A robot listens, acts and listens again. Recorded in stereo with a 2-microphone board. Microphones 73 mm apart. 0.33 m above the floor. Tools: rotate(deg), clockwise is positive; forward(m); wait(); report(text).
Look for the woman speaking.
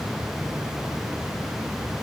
wait()
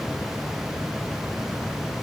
wait()
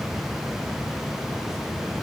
report("I can't make out a woman speaking to turn to.")